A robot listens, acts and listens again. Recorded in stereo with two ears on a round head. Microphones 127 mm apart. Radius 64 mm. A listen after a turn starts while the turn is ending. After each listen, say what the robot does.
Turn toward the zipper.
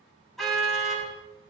Keep listening.
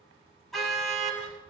Keep listening.
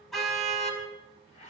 Turn 50° left.
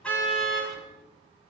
Keep listening.
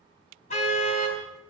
Keep listening.
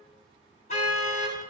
I heard a zipper, but can't make it out now. It was about straight ahead or 80° left.